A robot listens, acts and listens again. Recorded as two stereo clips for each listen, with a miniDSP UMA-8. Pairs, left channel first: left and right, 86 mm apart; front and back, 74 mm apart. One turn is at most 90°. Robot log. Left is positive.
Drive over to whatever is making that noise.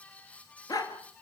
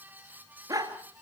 note: The dog barking: 135° left.
cmd yaw +90
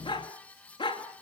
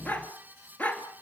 note: The dog barking is now 70° left.
cmd yaw +70
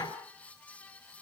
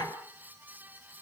note: The dog barking is now 35° left.
cmd yaw +35
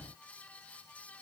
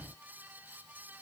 cmd idle
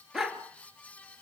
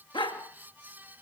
cmd fwd 1.0
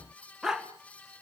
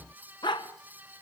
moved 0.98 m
cmd fwd 1.0
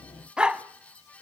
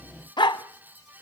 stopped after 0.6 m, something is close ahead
note: The dog barking is now 10° right.
cmd yaw -10
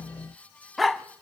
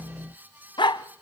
end: I am next to the dog barking.